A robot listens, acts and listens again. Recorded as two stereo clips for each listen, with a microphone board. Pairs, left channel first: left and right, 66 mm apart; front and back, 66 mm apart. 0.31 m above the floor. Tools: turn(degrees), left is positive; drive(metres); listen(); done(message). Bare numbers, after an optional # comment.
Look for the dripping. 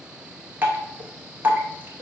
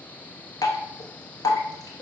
# The dripping: 25° right.
turn(-25)
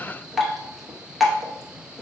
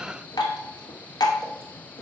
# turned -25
done("Found it: dripping, straight ahead.")